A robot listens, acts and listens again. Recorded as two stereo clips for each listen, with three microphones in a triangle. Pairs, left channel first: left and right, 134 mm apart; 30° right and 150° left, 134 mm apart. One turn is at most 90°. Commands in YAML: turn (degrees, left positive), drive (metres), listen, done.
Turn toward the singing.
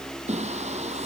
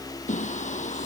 turn: -55
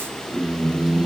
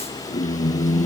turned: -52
done: "Found it: singing, straight ahead."